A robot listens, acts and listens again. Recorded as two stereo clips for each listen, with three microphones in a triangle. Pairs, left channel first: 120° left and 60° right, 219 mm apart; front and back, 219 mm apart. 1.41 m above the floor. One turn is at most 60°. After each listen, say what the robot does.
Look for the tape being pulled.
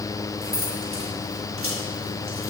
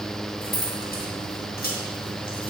Keep listening.
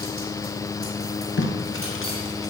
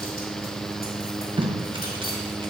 Turn 60° left.
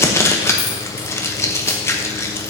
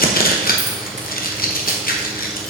Turn 40° left.
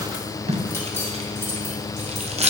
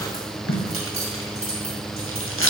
Facing the tape being pulled.